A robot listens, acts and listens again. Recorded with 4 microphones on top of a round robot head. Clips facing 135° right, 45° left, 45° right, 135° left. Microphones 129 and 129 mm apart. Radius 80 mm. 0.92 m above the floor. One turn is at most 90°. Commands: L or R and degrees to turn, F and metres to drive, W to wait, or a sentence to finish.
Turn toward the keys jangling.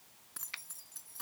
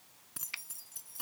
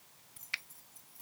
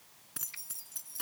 L90
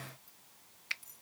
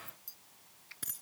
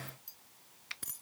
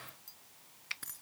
L30
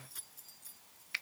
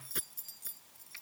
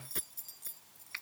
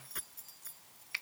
L15
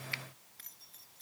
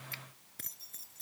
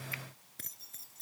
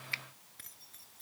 Found it: keys jangling, straight ahead.